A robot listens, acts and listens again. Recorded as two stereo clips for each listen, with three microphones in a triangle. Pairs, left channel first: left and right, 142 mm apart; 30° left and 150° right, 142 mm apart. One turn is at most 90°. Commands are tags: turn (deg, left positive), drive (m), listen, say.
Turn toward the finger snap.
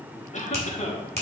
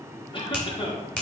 <turn deg="-50"/>
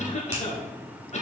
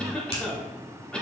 <turn deg="-15"/>
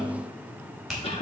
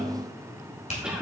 <say>Found it: a finger snap, straight ahead.</say>